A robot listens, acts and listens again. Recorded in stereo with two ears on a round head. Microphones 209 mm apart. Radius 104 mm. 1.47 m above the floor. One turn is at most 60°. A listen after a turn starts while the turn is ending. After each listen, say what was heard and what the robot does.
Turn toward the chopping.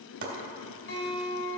The chopping: about 50° right or 130° right. Turn 50° right.
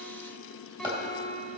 So it is at 10° right. Turn 10° right.
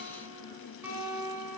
Keep listening.
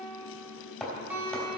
Facing the chopping.